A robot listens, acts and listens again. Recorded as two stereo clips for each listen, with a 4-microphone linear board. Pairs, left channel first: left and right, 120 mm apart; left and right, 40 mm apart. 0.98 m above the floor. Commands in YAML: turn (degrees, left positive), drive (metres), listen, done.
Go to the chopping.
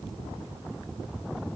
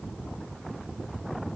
listen: true
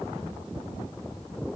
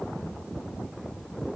listen: true
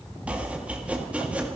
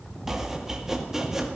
turn: -30
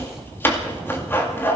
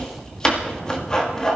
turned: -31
turn: 20
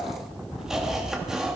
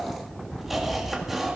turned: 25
drive: 1.0
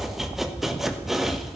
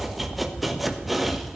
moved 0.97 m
drive: 1.0
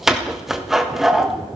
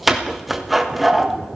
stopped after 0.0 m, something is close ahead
done: "Arrived at the chopping, straight ahead."